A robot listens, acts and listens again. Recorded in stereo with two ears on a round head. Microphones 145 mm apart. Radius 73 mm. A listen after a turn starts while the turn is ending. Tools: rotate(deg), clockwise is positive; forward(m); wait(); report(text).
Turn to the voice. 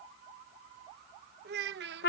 rotate(70)
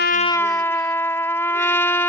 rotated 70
wait()
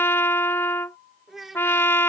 report("Facing the child speaking.")